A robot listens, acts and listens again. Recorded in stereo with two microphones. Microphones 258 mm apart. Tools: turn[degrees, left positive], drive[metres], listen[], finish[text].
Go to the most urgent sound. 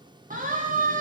Thought: The siren: about 30° right or 150° right.
Action: turn[-30]
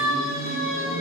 Thought: So it is at 115° right.
Action: turn[-115]
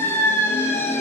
Thought: The siren is now 10° left.
Action: turn[10]
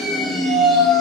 Action: drive[1.0]
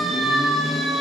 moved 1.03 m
Action: drive[1.0]
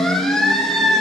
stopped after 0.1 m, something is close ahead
Action: finish[Arrived at the siren, straight ahead.]